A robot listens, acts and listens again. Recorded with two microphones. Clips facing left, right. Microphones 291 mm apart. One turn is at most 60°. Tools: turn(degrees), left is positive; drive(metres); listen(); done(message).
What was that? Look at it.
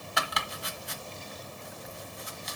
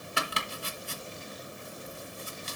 turn(degrees=-35)
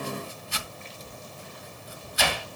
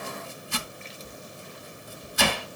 turn(degrees=-60)
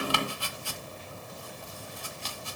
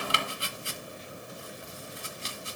turn(degrees=-25)
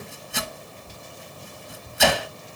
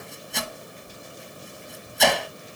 done("Facing the chopping.")